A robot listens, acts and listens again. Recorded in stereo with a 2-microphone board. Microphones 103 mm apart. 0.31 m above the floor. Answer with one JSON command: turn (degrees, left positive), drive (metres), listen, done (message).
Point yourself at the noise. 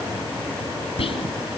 {"turn": 65}
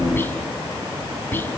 {"turn": 20}
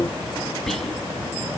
{"done": "Facing the whispering."}